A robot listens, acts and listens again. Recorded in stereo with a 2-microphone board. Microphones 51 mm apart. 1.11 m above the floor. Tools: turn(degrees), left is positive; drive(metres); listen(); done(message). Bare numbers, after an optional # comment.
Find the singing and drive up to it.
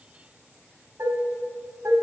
listen()
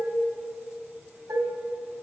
listen()
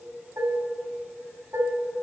done("I can't make out singing to turn to.")